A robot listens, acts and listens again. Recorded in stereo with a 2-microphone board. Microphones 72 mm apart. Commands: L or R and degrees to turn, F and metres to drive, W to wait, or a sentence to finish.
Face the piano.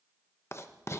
W
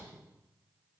W
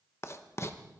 I can't make out a piano to turn to.